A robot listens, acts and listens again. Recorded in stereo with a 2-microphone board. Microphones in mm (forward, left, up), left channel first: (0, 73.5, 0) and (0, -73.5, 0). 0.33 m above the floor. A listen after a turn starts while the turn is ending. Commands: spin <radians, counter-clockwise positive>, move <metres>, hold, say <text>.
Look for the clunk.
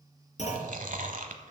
spin 0.96
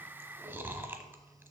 hold
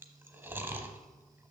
say I heard a clunk, but can't make it out now. It was about straight ahead or 70° left.